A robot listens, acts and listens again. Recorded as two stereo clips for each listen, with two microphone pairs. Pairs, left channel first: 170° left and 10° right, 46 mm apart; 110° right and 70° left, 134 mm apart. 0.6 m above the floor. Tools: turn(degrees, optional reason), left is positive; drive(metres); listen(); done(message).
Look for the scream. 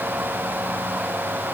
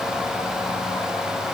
listen()
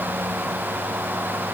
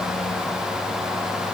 listen()
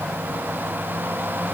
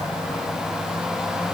done("I can't make out a scream.")